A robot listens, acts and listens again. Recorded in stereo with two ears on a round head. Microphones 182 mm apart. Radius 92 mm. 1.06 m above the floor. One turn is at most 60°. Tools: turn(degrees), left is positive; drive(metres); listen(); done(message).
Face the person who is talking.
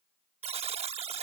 listen()
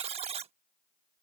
listen()
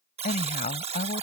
turn(degrees=35)
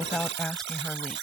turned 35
done("Found it: a woman speaking, straight ahead.")